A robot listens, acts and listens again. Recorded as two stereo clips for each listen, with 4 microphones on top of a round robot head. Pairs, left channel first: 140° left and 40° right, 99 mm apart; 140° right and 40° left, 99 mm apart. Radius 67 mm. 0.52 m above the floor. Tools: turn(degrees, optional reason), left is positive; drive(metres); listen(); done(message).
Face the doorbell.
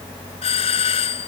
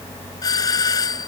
turn(degrees=165, reason="The doorbell: 165° left.")
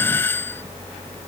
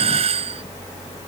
turn(degrees=70, reason="The doorbell is now 70° left.")
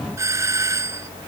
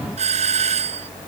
turn(degrees=25, reason="The doorbell is now 25° left.")
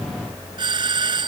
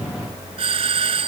done("Found it: a doorbell, straight ahead.")